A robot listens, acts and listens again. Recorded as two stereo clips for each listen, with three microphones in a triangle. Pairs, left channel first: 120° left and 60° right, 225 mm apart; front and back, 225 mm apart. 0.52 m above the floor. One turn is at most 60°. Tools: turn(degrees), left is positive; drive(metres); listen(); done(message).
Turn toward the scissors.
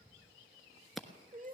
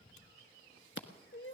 turn(degrees=30)
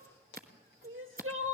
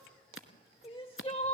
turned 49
turn(degrees=-15)
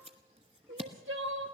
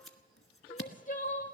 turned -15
done("Found it: scissors, straight ahead, 1 to 2 m away.")